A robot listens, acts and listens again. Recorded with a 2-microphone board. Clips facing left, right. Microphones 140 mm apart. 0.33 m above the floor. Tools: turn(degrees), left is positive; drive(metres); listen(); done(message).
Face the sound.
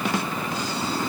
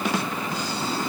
listen()
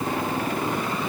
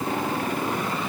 listen()
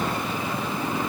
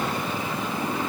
done("I can't make out anything.")